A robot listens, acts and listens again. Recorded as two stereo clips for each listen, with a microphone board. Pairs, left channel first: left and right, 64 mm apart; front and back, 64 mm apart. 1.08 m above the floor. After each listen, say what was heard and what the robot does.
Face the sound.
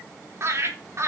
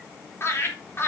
The laughter: 50° right. Turn 50° right.
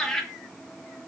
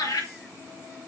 Found it: laughter, straight ahead, 2 to 4 m away.